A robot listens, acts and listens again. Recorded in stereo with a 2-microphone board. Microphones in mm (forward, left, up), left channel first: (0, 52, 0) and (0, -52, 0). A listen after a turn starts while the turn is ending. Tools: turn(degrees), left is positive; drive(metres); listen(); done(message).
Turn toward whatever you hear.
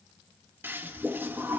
turn(degrees=-20)
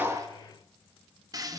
turn(degrees=-145)
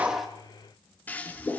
turn(degrees=15)
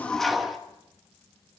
done("Facing the toilet flushing, 1 to 2 m away.")